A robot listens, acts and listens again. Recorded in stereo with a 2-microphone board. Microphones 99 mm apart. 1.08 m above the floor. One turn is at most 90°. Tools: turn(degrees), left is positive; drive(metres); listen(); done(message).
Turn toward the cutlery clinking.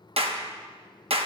listen()
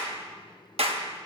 listen()
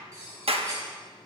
turn(degrees=-30)
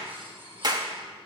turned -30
listen()
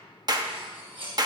turn(degrees=-90)
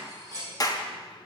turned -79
turn(degrees=-40)
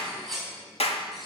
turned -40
done("Found it: cutlery clinking, straight ahead.")